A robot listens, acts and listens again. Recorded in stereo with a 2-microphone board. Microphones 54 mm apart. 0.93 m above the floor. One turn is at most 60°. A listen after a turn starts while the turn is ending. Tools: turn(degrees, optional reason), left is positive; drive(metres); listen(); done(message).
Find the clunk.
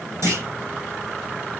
turn(degrees=-60, reason="The clunk: about 65° right or 115° right.")
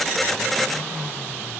listen()
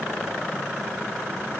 done("I heard a clunk, but can't make it out now. It was about 5° right or 55° right.")